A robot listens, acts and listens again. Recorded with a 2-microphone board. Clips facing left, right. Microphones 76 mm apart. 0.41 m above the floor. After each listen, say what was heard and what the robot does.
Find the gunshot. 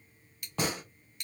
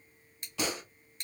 The gunshot: about 45° left or 135° left. Turn 45° left.
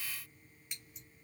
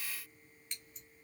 Keep listening.
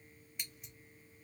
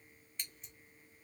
I heard a gunshot, but can't make it out now. It was about straight ahead or 90° left.